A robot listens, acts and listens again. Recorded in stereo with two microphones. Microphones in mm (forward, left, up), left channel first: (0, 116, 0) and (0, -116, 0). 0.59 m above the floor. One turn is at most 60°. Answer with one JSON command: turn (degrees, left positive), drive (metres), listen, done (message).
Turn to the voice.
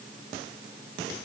{"listen": true}
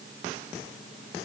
{"listen": true}
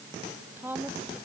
{"turn": -30}
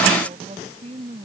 {"turn": -60}
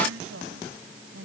{"turn": -60}
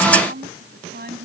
{"turn": -45}
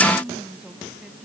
{"done": "Found it: a woman speaking, straight ahead."}